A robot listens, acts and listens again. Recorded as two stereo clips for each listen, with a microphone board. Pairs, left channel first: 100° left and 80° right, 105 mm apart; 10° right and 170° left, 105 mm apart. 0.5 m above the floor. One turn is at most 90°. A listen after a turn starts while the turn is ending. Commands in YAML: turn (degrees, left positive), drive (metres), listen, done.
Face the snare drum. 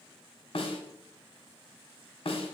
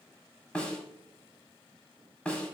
turn: 70
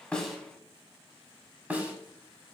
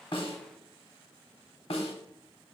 done: "Facing the snare drum."